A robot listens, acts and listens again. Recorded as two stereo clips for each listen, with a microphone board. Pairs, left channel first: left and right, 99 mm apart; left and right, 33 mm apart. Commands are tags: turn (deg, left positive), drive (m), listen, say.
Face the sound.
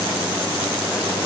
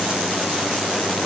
<listen/>
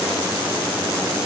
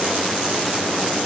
<listen/>
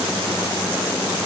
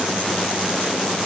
<say>I can't make out anything.</say>